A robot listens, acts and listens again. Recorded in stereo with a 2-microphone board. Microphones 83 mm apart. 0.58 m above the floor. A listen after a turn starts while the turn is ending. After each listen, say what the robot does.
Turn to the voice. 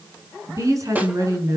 Turn 40° right.
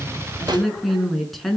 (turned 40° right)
Found it: a woman speaking, straight ahead, over 4 m away.